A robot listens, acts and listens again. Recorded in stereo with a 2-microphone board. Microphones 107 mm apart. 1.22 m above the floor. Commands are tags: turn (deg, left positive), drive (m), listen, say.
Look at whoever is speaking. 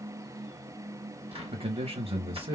<turn deg="-60"/>
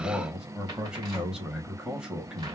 <turn deg="-10"/>
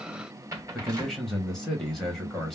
<say>Found it: a man speaking, straight ahead.</say>